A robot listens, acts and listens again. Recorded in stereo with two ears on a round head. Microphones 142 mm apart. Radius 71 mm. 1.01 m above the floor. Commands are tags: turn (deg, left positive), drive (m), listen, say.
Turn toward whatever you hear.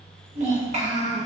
<turn deg="-45"/>
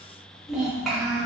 <say>Facing the child speaking, 1 to 2 m away.</say>